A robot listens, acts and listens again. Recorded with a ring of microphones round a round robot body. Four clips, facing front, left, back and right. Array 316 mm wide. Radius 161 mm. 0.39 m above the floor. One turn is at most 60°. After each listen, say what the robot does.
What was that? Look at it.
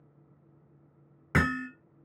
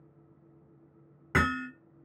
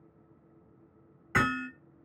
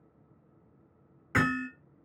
Turn 30° left.
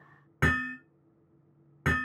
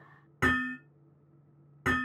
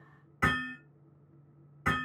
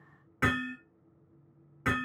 Turn 10° left.
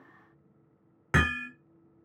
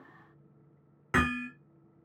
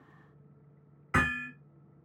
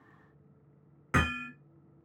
Found it: hammering, straight ahead, 1 to 2 m away.